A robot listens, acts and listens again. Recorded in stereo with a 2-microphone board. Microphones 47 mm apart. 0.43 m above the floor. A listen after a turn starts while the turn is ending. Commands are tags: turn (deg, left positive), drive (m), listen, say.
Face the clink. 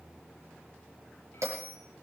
<listen/>
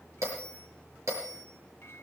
<listen/>
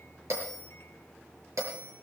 <say>I can't make out a clink to turn to.</say>